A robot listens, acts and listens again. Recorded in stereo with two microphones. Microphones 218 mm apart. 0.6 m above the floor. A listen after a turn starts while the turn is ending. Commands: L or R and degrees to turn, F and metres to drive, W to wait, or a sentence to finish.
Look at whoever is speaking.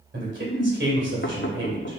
R60
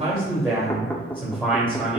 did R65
R10
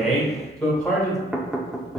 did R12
Found it: a man speaking, straight ahead, 2 to 4 m away.